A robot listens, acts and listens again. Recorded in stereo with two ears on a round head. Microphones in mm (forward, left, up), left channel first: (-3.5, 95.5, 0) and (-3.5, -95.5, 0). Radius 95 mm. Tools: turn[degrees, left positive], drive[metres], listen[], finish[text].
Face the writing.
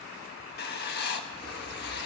Thought: The writing: about 50° left or 130° left.
Action: turn[50]
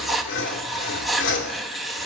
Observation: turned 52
Action: finish[Facing the writing.]